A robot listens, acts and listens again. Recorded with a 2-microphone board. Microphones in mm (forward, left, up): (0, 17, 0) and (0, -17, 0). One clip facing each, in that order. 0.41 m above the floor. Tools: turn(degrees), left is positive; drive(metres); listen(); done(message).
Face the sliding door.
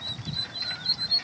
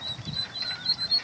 listen()
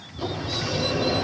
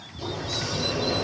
turn(degrees=35)
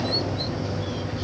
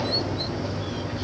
done("Found it: a sliding door, straight ahead.")